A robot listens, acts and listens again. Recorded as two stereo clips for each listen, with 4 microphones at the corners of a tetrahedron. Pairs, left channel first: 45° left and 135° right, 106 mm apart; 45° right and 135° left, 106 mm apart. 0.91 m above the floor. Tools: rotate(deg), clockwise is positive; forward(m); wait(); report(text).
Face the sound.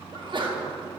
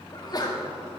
rotate(95)
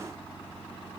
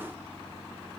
report("Facing where the sneeze came from. I can't hear it now.")